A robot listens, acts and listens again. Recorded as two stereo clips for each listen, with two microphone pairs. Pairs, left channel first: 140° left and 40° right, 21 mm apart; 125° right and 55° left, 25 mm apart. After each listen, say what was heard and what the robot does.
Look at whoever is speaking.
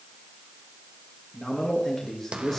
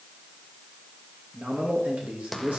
The man speaking: 60° left. Turn 60° left.
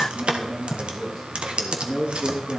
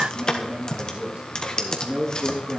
The man speaking is now 25° left. Turn 25° left.
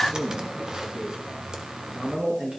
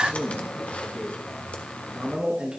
Found it: a man speaking, straight ahead, 2 to 4 m away.